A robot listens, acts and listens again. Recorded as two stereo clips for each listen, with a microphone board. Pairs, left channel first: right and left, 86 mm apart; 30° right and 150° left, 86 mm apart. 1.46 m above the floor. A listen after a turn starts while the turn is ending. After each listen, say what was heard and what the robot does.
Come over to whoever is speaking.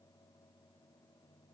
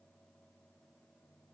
Keep listening.
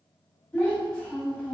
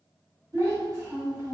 The child speaking: 170° right. Turn 170° right.
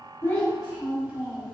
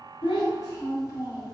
The child speaking is now 10° left. Turn 10° left.
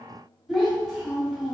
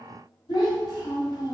Drive 1.0 m forward.
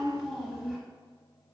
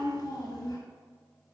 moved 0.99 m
Drive 1.0 m forward.
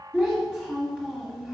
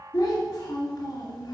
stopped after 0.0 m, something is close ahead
The child speaking is now 10° right. Turn 10° right.
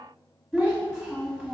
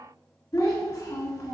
Arrived at the child speaking, straight ahead.